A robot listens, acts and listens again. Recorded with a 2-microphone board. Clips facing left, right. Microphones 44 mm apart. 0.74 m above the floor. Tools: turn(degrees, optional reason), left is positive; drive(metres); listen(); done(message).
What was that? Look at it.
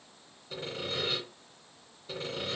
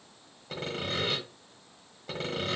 turn(degrees=-75, reason="The sawing: about 75° right or 105° right.")
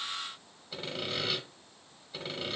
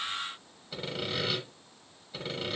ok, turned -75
done("Found it: sawing, straight ahead.")